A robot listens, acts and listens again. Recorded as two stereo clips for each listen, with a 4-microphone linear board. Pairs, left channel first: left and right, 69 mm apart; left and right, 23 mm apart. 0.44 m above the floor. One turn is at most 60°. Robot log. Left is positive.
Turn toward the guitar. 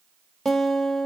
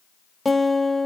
cmd yaw +30
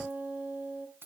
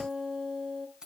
note: So it is at 25° right.
cmd yaw -25
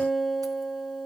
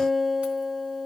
end: Found it: a guitar, straight ahead.